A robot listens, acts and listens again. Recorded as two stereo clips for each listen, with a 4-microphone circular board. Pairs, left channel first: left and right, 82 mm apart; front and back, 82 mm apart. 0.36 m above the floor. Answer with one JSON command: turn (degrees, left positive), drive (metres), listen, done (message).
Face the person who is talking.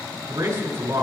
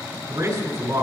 {"turn": -145}
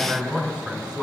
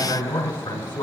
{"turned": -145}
{"turn": -15}
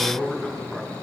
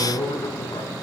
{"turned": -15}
{"done": "Found it: a man speaking, straight ahead, over 4 m away."}